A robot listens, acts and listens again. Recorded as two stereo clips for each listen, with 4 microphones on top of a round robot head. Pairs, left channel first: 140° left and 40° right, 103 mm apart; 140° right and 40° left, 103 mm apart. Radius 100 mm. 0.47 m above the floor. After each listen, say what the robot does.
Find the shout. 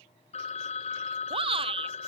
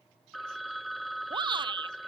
Found it: a shout, straight ahead.